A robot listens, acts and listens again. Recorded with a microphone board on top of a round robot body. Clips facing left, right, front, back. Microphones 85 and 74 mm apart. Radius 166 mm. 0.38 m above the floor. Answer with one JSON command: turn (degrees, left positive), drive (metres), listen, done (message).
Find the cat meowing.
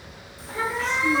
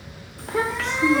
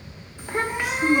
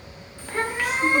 {"turn": 130}
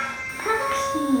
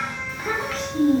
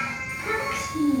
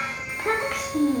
{"turn": -20}
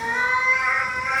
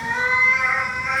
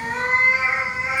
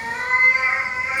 {"done": "Facing the cat meowing."}